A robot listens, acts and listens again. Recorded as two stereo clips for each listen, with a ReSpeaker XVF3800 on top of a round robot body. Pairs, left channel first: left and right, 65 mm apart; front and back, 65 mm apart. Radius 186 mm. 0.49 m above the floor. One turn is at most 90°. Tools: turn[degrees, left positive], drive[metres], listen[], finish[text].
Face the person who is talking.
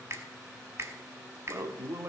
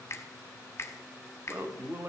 Thought: The man speaking: 130° right.
Action: turn[-90]
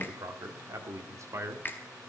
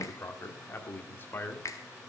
Thought: The man speaking is now 55° right.
Action: turn[-55]
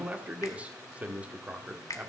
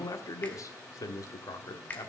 Thought: The man speaking is now 20° right.
Action: turn[-20]
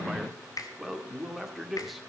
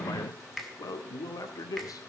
Action: finish[Found it: a man speaking, straight ahead.]